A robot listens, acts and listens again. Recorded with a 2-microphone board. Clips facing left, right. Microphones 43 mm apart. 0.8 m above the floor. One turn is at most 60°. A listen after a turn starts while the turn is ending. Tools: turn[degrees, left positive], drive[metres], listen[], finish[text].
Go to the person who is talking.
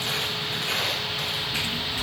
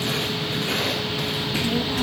Action: turn[-60]
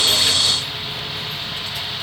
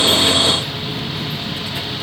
Thought: So it is at 25° right.
Action: turn[-25]
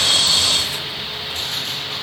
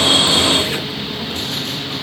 Action: listen[]
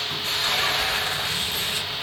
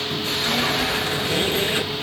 Action: drive[1.0]
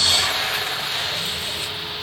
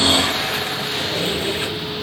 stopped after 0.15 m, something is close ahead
Action: listen[]
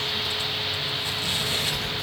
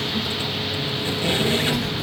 Action: finish[Something is in my way. I am facing the child speaking but have not reached it.]